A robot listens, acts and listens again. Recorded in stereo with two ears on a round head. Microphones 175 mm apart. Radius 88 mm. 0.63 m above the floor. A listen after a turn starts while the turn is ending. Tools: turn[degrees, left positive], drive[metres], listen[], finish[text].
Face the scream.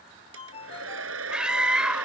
Action: turn[-30]
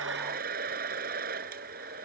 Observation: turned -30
Action: listen[]
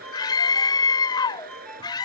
Thought: So it is at 25° left.
Action: turn[25]
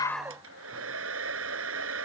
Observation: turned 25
Action: listen[]
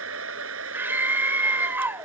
Thought: The scream is now 10° right.
Action: turn[-10]
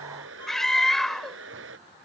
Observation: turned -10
Action: finish[Found it: a scream, straight ahead.]